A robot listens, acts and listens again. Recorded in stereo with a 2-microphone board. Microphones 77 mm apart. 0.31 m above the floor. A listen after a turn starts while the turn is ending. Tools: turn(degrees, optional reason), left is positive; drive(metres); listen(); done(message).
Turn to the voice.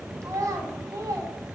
turn(degrees=-45, reason="The child speaking: about 45° right or 135° right.")
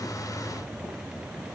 listen()
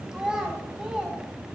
turn(degrees=-10, reason="So it is at 10° right.")
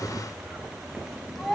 done("Facing the child speaking.")